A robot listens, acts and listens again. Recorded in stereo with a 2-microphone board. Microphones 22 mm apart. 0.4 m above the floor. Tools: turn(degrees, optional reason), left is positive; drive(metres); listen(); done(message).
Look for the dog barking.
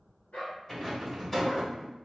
turn(degrees=90)
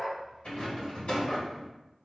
turn(degrees=30, reason="So it is at 30° left.")
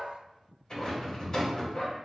turn(degrees=60, reason="The dog barking is now 60° left.")
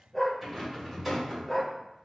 turn(degrees=15, reason="The dog barking is now 15° left.")
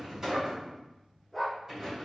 done("Facing the dog barking.")